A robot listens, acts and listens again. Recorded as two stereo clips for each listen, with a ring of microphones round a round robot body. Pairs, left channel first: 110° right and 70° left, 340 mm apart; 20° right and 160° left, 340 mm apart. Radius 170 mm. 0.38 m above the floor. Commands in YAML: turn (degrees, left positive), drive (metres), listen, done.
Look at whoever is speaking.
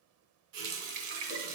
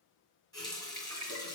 listen: true
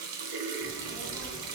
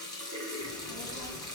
turn: -20
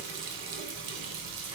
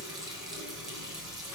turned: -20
turn: -10
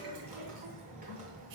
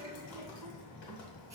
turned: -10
done: "Found it: a child speaking, straight ahead, 1 to 2 m away."